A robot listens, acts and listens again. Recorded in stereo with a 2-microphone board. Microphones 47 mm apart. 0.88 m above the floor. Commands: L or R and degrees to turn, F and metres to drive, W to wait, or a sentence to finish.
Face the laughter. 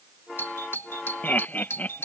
L40
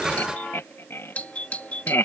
L100
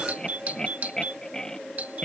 L15
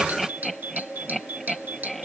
Found it: laughter, straight ahead.